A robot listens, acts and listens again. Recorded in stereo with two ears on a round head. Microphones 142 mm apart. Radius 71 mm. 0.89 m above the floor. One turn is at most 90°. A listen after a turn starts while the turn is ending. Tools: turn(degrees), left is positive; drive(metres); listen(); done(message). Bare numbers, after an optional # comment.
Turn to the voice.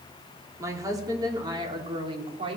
# The woman speaking: about 35° right or 145° right.
turn(-35)
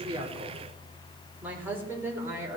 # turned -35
# So it is at 20° right.
turn(-20)
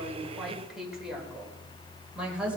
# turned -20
done("Facing the woman speaking, over 4 m away.")